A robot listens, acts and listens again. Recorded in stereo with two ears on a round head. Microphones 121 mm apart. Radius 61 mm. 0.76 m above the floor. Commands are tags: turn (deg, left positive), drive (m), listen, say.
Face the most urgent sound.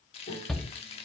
<turn deg="30"/>
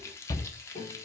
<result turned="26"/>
<turn deg="150"/>
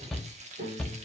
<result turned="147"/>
<say>Facing the shout.</say>